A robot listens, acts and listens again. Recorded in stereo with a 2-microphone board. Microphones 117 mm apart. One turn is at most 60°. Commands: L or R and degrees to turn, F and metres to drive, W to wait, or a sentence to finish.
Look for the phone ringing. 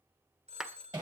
R60
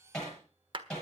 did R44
W
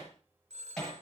R60
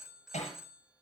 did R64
Facing the phone ringing.